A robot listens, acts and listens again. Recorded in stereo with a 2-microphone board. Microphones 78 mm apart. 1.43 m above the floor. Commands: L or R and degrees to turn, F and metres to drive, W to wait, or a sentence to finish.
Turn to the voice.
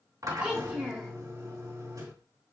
R30
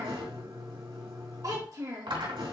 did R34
R130
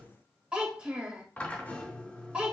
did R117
R15
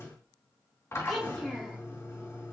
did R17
Facing the child speaking.